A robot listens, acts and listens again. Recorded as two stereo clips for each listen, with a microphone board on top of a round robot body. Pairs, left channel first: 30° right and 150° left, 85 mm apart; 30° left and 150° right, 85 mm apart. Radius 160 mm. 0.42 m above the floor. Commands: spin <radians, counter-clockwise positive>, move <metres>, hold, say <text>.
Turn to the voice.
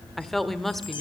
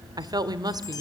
spin -2.09
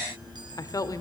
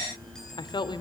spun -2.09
spin 0.26
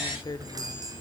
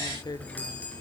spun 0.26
say Found it: a woman speaking, straight ahead, 1 to 2 m away.